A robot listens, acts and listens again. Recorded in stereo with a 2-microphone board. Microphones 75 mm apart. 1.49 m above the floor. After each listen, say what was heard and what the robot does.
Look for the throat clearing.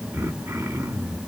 The throat clearing: about 45° right or 135° right. Turn 45° right.
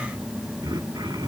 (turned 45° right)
So it is at 95° right. Turn 95° right.
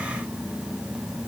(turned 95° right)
Keep listening.
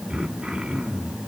Facing the throat clearing, 2 to 4 m away.